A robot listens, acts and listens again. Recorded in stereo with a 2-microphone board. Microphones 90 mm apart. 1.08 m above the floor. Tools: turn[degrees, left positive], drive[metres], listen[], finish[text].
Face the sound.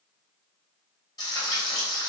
Thought: The frying: about 40° left or 140° left.
Action: turn[40]
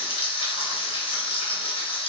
Thought: So it is at 95° left.
Action: turn[95]
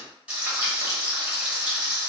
Thought: The frying is now 15° right.
Action: turn[-15]
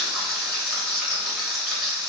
Action: finish[Found it: frying, straight ahead, under 1 m away.]